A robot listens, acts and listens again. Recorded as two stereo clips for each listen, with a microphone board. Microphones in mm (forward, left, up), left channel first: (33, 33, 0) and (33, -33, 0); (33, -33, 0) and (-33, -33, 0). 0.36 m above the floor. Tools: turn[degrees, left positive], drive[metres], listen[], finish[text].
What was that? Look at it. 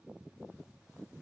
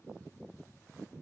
Action: listen[]
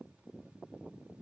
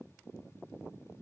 Action: listen[]
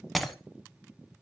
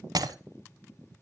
Thought: The breaking glass: straight behind.
Action: turn[180]
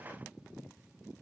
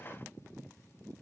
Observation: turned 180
Action: finish[I heard breaking glass from this way, but can't make it out now.]